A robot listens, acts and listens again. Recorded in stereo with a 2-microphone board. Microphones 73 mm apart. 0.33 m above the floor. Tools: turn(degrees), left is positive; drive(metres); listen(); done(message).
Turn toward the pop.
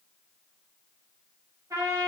listen()
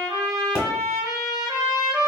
turn(degrees=50)
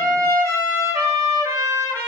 listen()
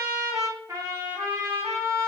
done("I heard a pop, but can't make it out now. It was about straight ahead or 80° left.")